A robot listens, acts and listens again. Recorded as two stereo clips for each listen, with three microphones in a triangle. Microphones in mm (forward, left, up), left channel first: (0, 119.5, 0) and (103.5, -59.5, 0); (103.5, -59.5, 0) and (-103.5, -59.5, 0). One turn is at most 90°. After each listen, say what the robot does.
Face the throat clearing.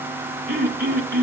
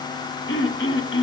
Turn 20° right.
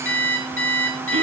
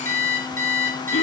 Keep listening.
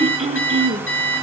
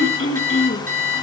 Facing the throat clearing.